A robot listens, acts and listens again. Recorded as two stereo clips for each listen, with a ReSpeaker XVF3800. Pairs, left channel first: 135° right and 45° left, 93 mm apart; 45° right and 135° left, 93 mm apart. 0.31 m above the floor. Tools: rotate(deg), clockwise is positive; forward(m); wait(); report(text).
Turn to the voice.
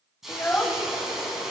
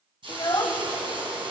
rotate(70)
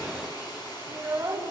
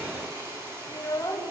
report("Facing the child speaking, under 1 m away.")